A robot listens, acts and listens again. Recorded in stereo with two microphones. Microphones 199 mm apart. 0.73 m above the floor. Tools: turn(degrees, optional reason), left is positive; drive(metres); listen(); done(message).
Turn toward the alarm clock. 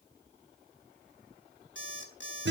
turn(degrees=70, reason="The alarm clock: about 70° left or 110° left.")
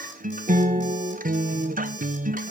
listen()
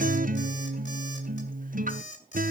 turn(degrees=40, reason="So it is at 40° left.")
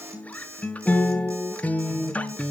turn(degrees=-15, reason="The alarm clock is now 15° right.")
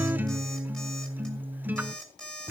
done("Found it: an alarm clock, straight ahead, 2 to 4 m away.")